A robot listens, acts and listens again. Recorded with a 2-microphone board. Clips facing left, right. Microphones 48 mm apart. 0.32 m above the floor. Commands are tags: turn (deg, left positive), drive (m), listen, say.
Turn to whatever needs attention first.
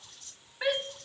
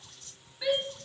<turn deg="55"/>
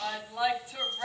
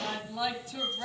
<turn deg="25"/>
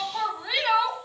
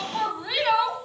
<say>Found it: a shout, straight ahead.</say>